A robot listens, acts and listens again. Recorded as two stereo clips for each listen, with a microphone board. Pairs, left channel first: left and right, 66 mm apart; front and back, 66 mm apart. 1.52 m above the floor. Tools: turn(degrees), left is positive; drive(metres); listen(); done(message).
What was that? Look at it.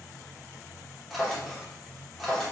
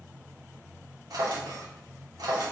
turn(degrees=180)
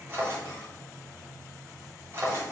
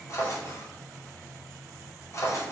turn(degrees=-40)
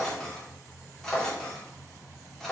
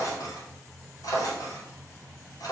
done("Found it: a drawer, straight ahead, 2 to 4 m away.")